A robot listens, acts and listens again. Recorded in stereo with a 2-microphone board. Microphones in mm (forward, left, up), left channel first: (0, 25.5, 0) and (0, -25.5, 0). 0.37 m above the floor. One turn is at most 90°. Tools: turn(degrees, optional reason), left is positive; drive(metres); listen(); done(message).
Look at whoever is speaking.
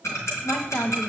turn(degrees=55, reason="The woman speaking: about 55° left or 125° left.")
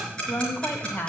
turn(degrees=50, reason="So it is at 50° left.")
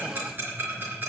listen()
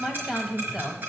turn(degrees=-10, reason="The woman speaking is now 10° right.")
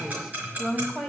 done("Found it: a woman speaking, straight ahead, 1 to 2 m away.")